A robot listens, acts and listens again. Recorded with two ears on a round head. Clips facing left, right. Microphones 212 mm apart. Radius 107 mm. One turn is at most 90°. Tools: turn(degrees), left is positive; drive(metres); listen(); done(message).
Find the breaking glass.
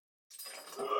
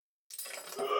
turn(degrees=-55)
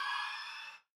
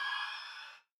listen()
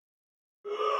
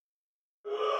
done("I heard breaking glass, but can't make it out now. It was about straight ahead or 70° right.")